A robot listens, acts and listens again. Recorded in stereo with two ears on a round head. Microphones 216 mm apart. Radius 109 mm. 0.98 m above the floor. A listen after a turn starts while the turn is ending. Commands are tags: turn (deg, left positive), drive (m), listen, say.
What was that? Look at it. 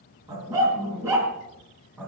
<turn deg="-30"/>
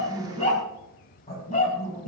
<turn deg="30"/>
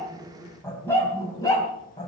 <turn deg="20"/>
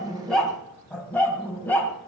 <say>Found it: a dog barking, straight ahead, 2 to 4 m away.</say>